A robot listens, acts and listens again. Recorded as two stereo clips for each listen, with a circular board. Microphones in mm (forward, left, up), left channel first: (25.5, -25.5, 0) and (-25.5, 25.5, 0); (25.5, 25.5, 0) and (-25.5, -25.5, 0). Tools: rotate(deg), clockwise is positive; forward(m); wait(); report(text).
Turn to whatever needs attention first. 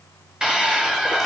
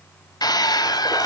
rotate(-55)
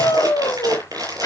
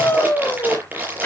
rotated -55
rotate(10)
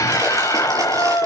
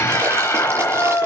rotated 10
report("Found it: a scream, straight ahead, over 4 m away.")